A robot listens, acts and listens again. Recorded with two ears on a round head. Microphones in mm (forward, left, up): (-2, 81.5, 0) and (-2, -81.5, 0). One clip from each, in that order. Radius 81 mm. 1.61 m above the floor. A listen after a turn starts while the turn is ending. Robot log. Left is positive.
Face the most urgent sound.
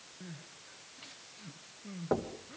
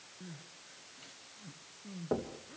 note: The crying: about 20° left or 160° left.
cmd yaw +20
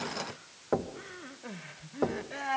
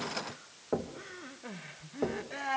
end: Found it: crying, straight ahead.